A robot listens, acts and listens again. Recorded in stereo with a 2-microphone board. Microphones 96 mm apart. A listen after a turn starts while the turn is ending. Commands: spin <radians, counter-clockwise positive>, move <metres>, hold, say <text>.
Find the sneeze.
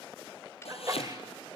spin -0.70
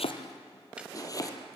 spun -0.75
hold
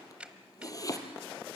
say I heard a sneeze, but can't make it out now. It was about 5° left or 100° right.